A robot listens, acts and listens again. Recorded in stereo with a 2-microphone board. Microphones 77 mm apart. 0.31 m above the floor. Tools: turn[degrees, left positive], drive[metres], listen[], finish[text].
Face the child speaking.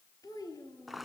Thought: The child speaking: about 55° left or 125° left.
Action: turn[55]
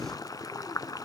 Action: listen[]
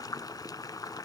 Action: listen[]
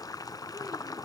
Action: finish[I heard a child speaking, but can't make it out now. It was about straight ahead or 70° left.]